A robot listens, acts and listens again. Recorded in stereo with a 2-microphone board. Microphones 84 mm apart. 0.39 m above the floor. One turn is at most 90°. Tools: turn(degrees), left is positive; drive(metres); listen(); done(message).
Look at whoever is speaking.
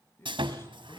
turn(degrees=30)
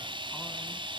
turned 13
listen()
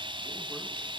listen()
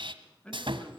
turn(degrees=30)
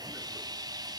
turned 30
listen()
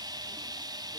listen()
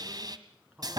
turn(degrees=-15)
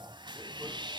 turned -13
listen()
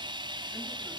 listen()
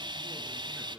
done("Found it: a man speaking, straight ahead, over 4 m away.")